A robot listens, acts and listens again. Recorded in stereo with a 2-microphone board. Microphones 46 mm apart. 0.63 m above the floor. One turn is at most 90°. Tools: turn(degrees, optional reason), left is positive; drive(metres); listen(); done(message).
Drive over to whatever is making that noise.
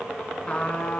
turn(degrees=25, reason="The trumpet: about 25° left or 155° left.")
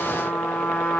turn(degrees=90, reason="So it is at 130° left.")
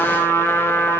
turn(degrees=60, reason="The trumpet is now 60° left.")
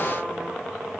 listen()
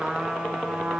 turn(degrees=-10, reason="The trumpet is now 10° right.")
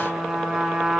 drive(metres=1.0)
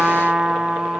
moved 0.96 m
turn(degrees=-10, reason="The trumpet is now 10° right.")
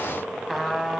drive(metres=1.0)
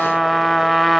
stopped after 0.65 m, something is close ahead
done("I am next to the trumpet.")